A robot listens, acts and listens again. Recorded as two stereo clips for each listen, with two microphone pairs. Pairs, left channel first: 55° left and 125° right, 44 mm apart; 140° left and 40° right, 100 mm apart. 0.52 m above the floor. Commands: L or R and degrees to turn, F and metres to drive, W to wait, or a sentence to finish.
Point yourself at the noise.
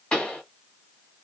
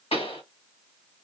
L125
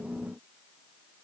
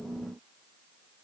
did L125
I heard a pop from this way, but can't make it out now.